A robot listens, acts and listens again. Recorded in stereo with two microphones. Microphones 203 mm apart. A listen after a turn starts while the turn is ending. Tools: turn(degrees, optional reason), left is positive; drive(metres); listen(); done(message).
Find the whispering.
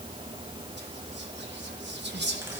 turn(degrees=-60, reason="The whispering: about 60° right or 120° right.")
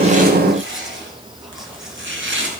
listen()
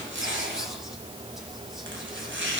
listen()
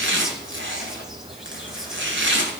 done("I heard whispering, but can't make it out now. It was about straight ahead or 60° right.")